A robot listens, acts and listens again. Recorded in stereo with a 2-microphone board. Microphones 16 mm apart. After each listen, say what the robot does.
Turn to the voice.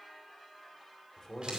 Turn 40° left.
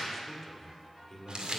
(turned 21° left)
Turn 20° left.
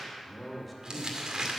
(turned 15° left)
Found it: a man speaking, straight ahead.